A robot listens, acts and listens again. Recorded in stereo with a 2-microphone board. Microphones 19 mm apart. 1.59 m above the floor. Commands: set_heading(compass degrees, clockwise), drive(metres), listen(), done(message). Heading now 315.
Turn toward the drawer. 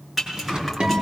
set_heading(10)
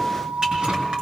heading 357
listen()
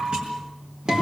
listen()
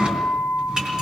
done("I heard a drawer, but can't make it out now. It was about 10° right or 85° right.")